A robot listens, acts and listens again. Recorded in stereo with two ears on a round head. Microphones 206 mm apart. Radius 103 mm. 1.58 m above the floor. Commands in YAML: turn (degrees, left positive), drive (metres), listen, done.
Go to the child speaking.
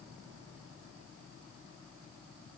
listen: true
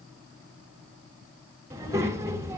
turn: -30
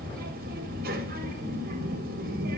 turn: -135
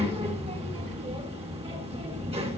turn: -25
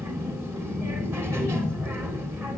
turn: -10
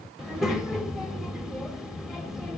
drive: 1.0
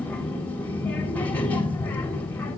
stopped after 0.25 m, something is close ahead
turn: 10
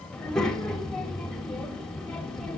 done: "Blocked. The child speaking is further on, straight ahead."